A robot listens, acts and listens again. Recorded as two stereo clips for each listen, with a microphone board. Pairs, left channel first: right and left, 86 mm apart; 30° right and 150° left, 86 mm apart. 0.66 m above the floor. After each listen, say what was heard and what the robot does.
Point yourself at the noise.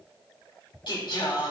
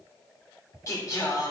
The singing: 75° right. Turn 75° right.
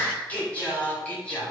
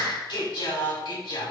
The singing is now 15° right. Turn 15° right.
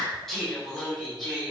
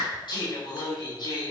Found it: singing, straight ahead.